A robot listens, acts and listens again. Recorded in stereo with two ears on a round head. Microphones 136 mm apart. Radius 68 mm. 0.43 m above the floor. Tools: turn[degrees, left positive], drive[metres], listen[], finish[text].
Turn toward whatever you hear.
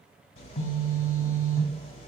Thought: The phone buzzing: about 40° left or 140° left.
Action: turn[40]
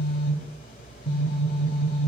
Thought: So it is at 95° left.
Action: turn[95]
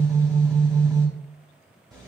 Action: finish[Found it: a phone buzzing, straight ahead.]